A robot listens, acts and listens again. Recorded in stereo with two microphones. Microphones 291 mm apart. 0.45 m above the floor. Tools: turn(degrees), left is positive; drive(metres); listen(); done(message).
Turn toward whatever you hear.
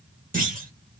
turn(degrees=-30)
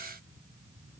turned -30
listen()
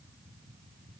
done("I heard a clunk, but can't make it out now. It was about straight ahead or 120° right.")